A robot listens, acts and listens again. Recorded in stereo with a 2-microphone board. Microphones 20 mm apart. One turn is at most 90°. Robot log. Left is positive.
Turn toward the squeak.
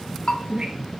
note: The squeak: about 40° right or 140° right.
cmd yaw -40
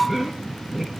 end: Found it: a squeak, straight ahead.